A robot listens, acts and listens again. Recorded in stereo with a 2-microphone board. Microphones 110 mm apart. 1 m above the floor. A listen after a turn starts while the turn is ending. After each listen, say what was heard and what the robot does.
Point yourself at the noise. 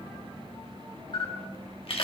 The camera shutter: about 55° left or 125° left. Turn 55° left.
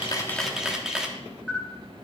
Facing the camera shutter, 1 to 2 m away.